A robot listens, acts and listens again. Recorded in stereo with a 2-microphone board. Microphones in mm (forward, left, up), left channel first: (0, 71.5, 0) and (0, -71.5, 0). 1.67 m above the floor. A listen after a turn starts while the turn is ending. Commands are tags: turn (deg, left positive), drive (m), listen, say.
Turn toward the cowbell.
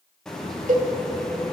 <turn deg="-60"/>
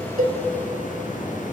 <listen/>
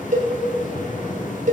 <turn deg="-60"/>
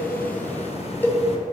<turn deg="15"/>
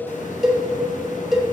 <say>Facing the cowbell, under 1 m away.</say>